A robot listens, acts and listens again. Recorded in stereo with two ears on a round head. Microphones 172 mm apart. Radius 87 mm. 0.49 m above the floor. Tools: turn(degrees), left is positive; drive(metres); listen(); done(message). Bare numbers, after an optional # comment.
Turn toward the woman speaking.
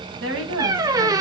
# The woman speaking: about 75° right or 105° right.
turn(-75)
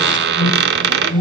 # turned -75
listen()
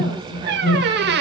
listen()
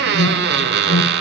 done("I heard a woman speaking, but can't make it out now. It was about straight ahead or 30° right.")